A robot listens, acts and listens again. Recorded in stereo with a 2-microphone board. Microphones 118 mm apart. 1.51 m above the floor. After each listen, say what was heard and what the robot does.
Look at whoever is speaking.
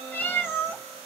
Keep listening.
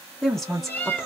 Turn 30° left.
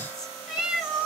Keep listening.
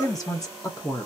So it is at 150° left. Turn 150° left.
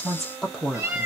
Facing the woman speaking, under 1 m away.